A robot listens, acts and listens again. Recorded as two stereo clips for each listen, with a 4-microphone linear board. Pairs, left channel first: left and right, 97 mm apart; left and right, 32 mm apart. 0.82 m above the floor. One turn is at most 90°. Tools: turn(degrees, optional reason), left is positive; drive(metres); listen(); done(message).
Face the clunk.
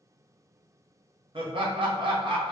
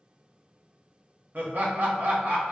listen()
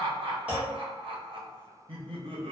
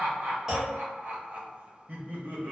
turn(degrees=-30)
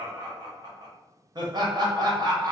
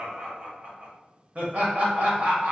listen()
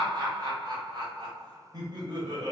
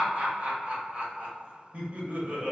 done("I heard a clunk, but can't make it out now. It was about 15° left or 135° right.")